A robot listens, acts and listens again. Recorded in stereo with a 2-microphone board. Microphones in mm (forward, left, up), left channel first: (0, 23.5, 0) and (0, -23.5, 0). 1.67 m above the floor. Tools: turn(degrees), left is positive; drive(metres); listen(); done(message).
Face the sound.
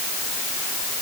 listen()
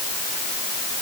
listen()
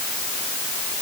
done("I can't make out anything to turn to.")